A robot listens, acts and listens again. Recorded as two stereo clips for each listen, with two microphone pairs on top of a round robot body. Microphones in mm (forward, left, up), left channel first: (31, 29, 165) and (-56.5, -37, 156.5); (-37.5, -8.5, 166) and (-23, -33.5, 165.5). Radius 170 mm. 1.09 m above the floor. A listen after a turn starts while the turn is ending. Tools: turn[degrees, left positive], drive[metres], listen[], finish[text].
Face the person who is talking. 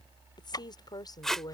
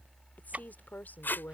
Thought: The woman speaking: 95° left.
Action: turn[95]
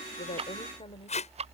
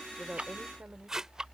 Action: listen[]
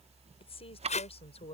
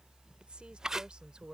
Action: finish[Facing the woman speaking.]